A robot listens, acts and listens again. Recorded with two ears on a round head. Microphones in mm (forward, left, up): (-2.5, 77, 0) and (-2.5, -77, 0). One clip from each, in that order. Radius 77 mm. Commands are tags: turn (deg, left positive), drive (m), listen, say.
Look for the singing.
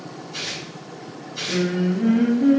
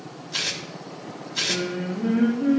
<turn deg="90"/>
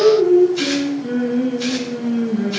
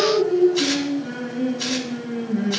<say>Found it: singing, straight ahead, over 4 m away.</say>